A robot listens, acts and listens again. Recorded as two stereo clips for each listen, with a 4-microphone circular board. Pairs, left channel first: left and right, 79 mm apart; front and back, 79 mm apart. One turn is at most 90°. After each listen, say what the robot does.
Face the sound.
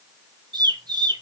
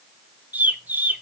Turn 90° right.
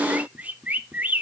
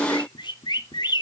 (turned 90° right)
Turn 20° right.
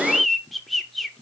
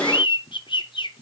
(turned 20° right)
Facing the bird.